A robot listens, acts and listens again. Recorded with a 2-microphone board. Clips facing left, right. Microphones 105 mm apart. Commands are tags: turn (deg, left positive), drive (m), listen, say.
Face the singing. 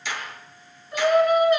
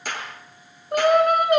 <turn deg="-60"/>
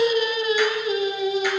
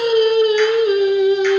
<turn deg="-75"/>
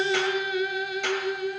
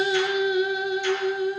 <turn deg="-30"/>
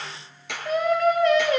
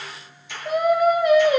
<turn deg="-15"/>
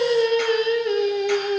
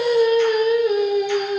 <say>Facing the singing.</say>